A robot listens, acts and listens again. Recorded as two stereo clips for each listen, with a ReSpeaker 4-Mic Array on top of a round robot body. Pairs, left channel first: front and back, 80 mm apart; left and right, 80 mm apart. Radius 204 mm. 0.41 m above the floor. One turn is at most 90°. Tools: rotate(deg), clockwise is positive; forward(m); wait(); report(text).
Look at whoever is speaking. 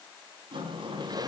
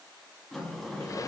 wait()
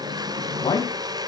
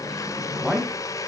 report("Facing the man speaking.")